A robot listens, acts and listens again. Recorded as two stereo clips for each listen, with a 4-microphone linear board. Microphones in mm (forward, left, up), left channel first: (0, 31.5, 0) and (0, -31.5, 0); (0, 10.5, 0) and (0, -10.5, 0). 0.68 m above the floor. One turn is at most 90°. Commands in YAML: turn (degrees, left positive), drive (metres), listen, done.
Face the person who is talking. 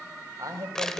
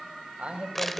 turn: -90
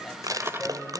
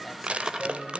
done: "Found it: a man speaking, straight ahead, over 4 m away."